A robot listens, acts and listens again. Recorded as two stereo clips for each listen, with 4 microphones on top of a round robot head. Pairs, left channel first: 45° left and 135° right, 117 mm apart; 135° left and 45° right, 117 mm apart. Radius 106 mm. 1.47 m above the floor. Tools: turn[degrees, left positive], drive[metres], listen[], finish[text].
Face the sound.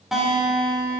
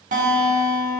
Thought: The guitar: 45° right.
Action: turn[-45]
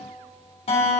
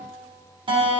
Action: finish[Facing the guitar, 2 to 4 m away.]